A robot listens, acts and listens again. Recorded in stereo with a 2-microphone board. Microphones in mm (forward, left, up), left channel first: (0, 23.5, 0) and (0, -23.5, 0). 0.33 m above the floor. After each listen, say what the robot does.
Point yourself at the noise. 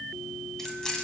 Turn 15° left.
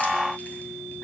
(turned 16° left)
Keep listening.
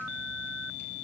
Keep listening.
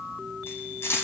Turn 110° left.
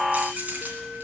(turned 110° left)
Turn 35° right.
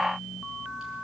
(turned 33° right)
Keep listening.
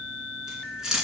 Turn 15° right.
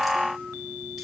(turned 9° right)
Keep listening.
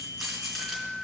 Found it: keys jangling, straight ahead.